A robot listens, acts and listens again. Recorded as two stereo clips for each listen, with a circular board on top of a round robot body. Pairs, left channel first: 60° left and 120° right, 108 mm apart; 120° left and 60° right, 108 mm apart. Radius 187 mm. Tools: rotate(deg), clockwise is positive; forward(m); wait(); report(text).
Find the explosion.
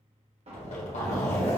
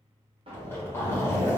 rotate(100)
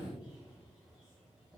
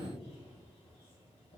report("Facing where the explosion came from. I can't hear it now.")